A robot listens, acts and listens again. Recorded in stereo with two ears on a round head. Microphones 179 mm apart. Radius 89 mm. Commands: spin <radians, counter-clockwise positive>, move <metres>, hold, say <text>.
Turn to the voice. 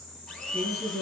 spin 0.52
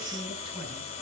hold
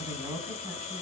spin -0.44
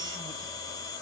hold
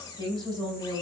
spin -0.44
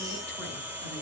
hold
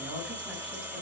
hold
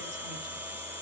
say I heard a woman speaking from this way, but can't make it out now.